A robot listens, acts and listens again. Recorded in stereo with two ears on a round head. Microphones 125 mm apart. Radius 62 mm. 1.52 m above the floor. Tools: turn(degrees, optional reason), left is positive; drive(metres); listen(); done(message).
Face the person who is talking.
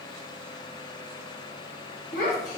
turn(degrees=55, reason="The child speaking: about 55° left or 125° left.")
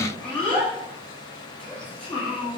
turn(degrees=10, reason="So it is at 10° left.")
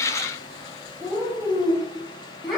done("Facing the child speaking.")